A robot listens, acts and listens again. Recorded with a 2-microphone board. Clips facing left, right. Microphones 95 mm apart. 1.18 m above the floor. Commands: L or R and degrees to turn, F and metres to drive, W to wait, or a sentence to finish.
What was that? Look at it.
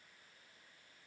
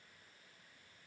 W
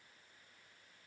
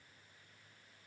W
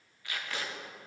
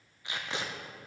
R25
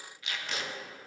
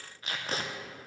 R130
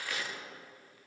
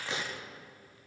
R30
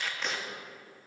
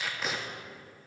Found it: tape being pulled, straight ahead, under 1 m away.